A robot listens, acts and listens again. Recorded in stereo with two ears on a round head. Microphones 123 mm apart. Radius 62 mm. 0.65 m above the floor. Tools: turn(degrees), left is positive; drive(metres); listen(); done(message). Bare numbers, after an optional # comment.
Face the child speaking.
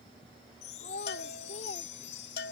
# The child speaking: about 60° left or 120° left.
turn(60)
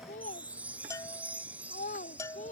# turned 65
# So it is at 55° left.
turn(55)
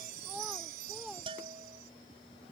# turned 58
listen()
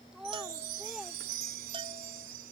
done("Facing the child speaking.")